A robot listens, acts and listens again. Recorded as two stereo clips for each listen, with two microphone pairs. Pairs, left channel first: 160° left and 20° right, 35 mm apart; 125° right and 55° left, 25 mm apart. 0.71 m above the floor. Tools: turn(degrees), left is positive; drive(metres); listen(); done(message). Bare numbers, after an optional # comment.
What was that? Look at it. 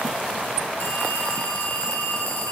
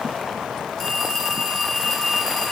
# The phone ringing: 160° left.
turn(160)
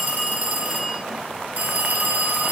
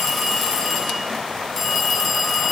# The phone ringing is now 40° right.
turn(-40)
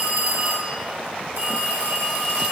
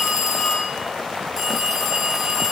# The phone ringing is now 20° right.
turn(-20)
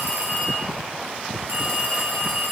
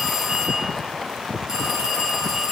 # The phone ringing is now 10° right.
turn(-10)
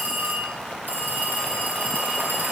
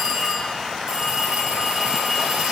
done("Facing the phone ringing.")